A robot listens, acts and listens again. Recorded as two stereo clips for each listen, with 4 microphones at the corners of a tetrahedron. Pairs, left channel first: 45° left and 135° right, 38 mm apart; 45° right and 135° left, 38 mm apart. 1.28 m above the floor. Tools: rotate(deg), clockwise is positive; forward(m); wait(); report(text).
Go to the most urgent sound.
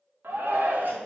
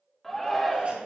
rotate(125)
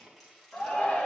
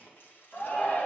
forward(1.0)
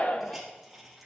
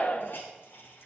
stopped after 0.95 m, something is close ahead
report("Arrived at the shout, straight ahead.")